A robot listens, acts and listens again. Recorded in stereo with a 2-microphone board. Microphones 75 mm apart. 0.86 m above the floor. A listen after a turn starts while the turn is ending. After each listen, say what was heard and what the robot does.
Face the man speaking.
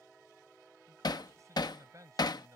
The man speaking: about 50° right or 130° right. Turn 50° right.
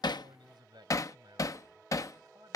So it is at 70° right. Turn 70° right.
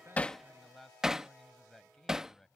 Facing the man speaking.